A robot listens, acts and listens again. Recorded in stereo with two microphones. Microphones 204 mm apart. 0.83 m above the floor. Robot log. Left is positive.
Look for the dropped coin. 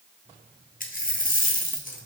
note: The dropped coin: about 40° left or 140° left.
cmd yaw +40
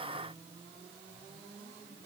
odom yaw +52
cmd idle
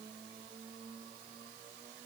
end: I heard a dropped coin, but can't make it out now. It was about 10° right or 85° left.